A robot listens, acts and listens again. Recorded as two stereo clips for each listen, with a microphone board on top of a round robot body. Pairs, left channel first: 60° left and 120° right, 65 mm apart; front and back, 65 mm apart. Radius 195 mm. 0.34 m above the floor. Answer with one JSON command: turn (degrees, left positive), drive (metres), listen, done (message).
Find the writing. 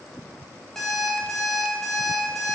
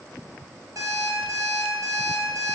{"listen": true}
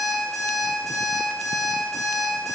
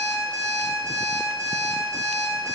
{"listen": true}
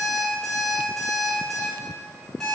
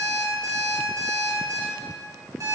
{"done": "I can't make out writing to turn to."}